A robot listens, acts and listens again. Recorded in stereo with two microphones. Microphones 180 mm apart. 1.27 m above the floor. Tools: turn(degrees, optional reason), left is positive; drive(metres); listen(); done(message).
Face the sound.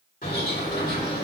turn(degrees=50, reason="The bird: about 50° left or 130° left.")
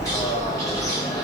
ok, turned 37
turn(degrees=20, reason="So it is at 20° left.")
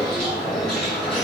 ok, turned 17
done("Found it: a bird, straight ahead, 1 to 2 m away.")